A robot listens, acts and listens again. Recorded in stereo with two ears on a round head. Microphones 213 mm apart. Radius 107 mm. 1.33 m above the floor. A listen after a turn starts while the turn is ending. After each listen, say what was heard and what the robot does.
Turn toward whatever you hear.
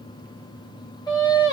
The singing: about 15° left or 165° left. Turn 15° left.
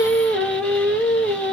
Facing the singing.